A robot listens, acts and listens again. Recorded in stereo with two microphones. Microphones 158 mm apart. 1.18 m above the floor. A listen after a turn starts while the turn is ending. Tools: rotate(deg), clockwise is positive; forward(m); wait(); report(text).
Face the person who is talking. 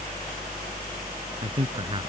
rotate(35)
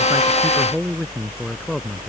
report("Found it: a man speaking, straight ahead.")